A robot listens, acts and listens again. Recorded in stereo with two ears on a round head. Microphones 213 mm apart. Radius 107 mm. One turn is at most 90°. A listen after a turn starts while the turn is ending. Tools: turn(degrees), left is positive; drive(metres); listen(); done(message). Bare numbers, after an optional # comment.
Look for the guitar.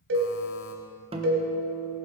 # The guitar: about 25° right or 155° right.
turn(-25)
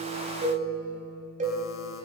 done("Facing the guitar, 1 to 2 m away.")